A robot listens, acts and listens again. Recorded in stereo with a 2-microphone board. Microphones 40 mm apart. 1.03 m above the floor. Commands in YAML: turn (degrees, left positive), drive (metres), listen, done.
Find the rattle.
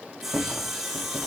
turn: -45
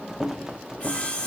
turn: -10
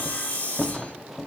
done: "Found it: a rattle, straight ahead, under 1 m away."